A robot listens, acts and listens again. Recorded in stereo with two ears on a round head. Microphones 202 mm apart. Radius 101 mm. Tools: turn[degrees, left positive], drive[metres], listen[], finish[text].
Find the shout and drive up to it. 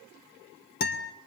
Action: listen[]
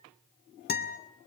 Action: listen[]
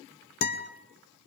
Action: finish[I can't make out a shout, only a guitar.]